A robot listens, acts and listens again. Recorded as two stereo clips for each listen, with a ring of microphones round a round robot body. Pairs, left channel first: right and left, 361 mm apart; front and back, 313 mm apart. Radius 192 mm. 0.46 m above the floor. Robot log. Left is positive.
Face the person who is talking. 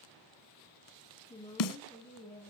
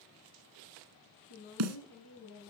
note: The woman speaking: 10° right.
cmd yaw -10
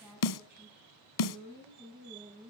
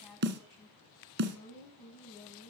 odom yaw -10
note: The woman speaking is now 15° left.
cmd yaw +15
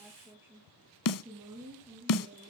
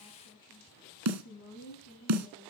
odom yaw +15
note: The woman speaking is now 15° left.
cmd yaw +15
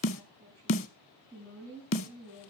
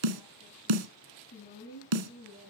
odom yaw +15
end: Found it: a woman speaking, straight ahead.